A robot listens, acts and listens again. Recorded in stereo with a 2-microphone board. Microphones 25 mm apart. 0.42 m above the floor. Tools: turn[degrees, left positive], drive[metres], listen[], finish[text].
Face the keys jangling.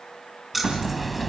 Action: turn[-30]
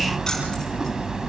Action: listen[]
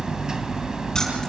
Action: listen[]
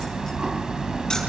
Action: finish[I heard keys jangling, but can't make it out now. It was about 20° left or 140° right.]